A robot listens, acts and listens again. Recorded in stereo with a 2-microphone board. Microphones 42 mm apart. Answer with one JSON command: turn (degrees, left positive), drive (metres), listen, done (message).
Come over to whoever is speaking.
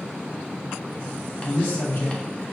{"turn": 65}
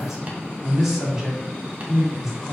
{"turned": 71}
{"turn": -10}
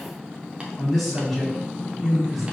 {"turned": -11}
{"drive": 1.0}
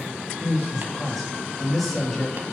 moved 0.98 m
{"drive": 1.0}
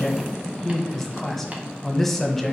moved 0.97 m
{"drive": 1.0}
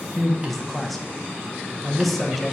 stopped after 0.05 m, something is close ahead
{"done": "Arrived at the man speaking, straight ahead."}